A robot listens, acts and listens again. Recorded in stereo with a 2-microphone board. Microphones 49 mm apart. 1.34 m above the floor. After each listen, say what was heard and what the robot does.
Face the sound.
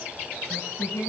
The singing: about 65° left or 115° left. Turn 65° left.
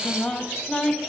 Found it: singing, straight ahead.